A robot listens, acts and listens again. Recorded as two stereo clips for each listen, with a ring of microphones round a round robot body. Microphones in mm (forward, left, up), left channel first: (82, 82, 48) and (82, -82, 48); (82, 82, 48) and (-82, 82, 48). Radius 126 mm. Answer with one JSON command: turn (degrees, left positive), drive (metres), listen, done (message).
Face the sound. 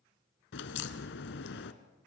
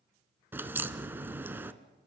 {"turn": 100}
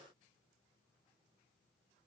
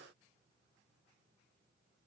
{"done": "I heard a crack from this way, but can't make it out now."}